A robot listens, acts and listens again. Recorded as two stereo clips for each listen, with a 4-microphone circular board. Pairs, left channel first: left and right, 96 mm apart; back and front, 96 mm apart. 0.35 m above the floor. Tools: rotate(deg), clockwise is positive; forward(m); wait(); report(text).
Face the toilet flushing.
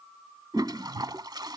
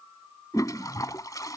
rotate(130)
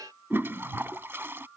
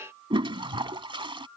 rotate(25)
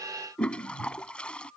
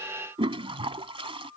rotate(-10)
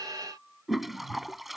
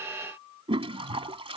report("Found it: a toilet flushing, straight ahead.")